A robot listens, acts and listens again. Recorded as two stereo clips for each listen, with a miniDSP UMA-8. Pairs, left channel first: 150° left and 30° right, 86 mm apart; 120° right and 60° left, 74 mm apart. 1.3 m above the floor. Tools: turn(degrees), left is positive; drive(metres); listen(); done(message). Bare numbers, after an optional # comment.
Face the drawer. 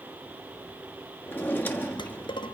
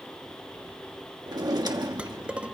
# The drawer: 85° left.
turn(85)
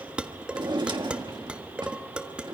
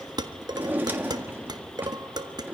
done("Found it: a drawer, straight ahead.")